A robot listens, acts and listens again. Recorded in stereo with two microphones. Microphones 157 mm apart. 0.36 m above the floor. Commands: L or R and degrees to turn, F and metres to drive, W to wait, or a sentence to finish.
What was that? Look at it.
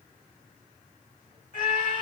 L60
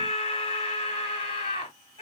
L45
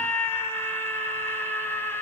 L15
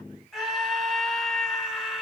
Facing the scream, 2 to 4 m away.